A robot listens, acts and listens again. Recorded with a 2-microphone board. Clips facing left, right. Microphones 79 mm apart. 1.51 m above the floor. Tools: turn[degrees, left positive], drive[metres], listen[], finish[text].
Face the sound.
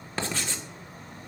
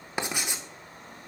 Thought: The writing: about 15° right or 165° right.
Action: turn[-15]
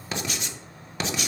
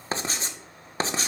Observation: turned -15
Thought: So it is at 145° right.
Action: turn[-145]
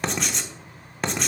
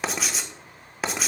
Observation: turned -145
Action: finish[Facing the writing, 1 to 2 m away.]